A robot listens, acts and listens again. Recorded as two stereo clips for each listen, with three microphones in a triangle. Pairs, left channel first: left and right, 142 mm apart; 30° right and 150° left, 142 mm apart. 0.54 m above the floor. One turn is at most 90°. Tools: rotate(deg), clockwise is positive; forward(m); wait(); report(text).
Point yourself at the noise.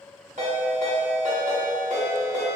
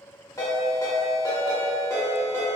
rotate(90)
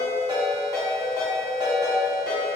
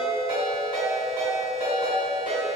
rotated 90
rotate(30)
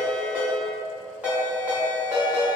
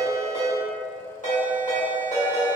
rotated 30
rotate(10)
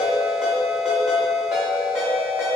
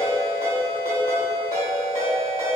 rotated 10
report("Found it: a ringtone, straight ahead.")